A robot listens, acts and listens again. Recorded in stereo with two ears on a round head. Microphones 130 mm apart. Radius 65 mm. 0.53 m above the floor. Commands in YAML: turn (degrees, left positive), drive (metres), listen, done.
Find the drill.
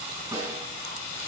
listen: true
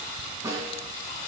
listen: true
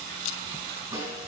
done: "I can't make out a drill to turn to."